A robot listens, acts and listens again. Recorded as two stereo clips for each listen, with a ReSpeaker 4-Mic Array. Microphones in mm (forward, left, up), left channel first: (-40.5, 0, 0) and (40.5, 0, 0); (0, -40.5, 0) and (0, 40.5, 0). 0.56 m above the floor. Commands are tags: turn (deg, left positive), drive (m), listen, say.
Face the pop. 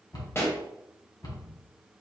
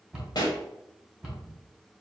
<turn deg="-120"/>
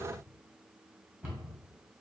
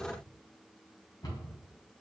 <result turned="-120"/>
<say>I heard a pop from this way, but can't make it out now.</say>